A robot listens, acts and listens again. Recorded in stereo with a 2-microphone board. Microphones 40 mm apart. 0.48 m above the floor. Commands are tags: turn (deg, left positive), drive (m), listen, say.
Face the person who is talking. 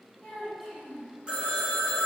<turn deg="15"/>
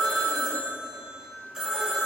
<listen/>
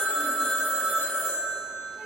<listen/>
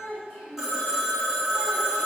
<turn deg="150"/>
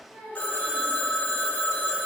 <turn deg="25"/>
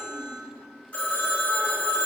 <listen/>
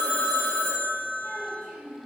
<turn deg="-10"/>
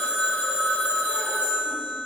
<listen/>
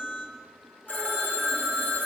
<listen/>
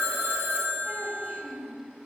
<say>Facing the child speaking, 1 to 2 m away.</say>